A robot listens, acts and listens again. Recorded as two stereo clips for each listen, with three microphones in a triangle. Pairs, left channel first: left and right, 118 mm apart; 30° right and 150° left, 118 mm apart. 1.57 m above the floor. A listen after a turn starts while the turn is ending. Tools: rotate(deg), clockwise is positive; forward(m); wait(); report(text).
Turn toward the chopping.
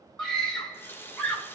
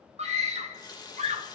wait()
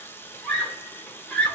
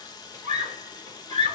wait()
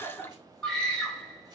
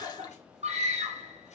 report("I can't make out chopping, only a scream and a running tap.")